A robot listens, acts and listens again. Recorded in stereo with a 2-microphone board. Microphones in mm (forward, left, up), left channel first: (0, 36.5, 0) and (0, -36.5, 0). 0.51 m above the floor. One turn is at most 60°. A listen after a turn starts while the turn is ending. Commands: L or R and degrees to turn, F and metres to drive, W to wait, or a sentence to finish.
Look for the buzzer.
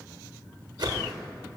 W
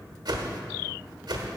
W
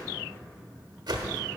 I can't make out a buzzer to turn to.